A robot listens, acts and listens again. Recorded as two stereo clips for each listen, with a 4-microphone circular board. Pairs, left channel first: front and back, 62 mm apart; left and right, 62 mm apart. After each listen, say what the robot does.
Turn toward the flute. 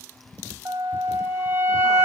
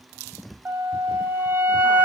Turn 145° right.
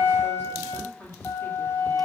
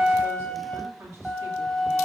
Turn 10° left.
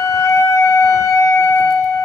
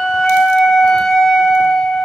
Facing the flute.